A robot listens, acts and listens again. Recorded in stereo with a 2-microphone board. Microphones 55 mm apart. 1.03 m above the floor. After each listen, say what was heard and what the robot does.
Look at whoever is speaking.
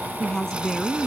Turn 30° left.
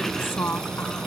So it is at 135° left. Turn 135° left.
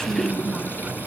Keep listening.
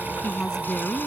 The woman speaking is now 10° left. Turn 10° left.
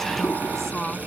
Found it: a woman speaking, straight ahead.